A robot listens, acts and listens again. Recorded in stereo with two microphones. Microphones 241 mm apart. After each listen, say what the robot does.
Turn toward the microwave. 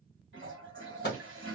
Turn 45° left.
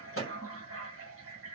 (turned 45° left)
Turn 85° left.
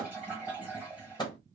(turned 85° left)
Turn 20° left.
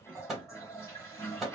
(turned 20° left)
Facing the microwave, 1 to 2 m away.